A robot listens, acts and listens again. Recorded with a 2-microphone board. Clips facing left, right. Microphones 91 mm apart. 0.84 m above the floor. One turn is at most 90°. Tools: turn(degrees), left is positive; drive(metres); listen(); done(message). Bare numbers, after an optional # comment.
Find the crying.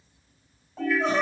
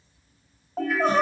# The crying: about 55° right or 125° right.
turn(-55)
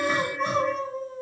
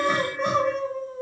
# So it is at 75° right.
turn(-75)
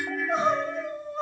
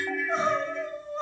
done("Facing the crying.")